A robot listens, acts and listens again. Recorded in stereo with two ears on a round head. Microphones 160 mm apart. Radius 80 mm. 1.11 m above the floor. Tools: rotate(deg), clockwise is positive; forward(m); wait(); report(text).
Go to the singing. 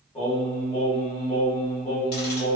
rotate(-20)
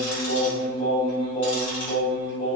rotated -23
rotate(-135)
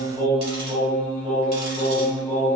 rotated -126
rotate(-10)
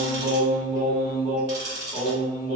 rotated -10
forward(1.0)
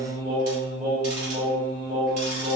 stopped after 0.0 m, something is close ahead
report("Blocked. The singing is further on, straight ahead.")